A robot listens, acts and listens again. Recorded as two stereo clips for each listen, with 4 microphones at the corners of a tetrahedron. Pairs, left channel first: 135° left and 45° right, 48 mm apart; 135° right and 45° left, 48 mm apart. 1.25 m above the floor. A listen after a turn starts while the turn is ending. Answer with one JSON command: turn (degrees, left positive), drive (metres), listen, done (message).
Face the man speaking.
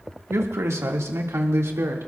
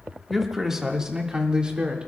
{"turn": -25}
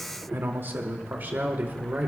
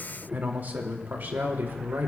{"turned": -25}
{"done": "Facing the man speaking."}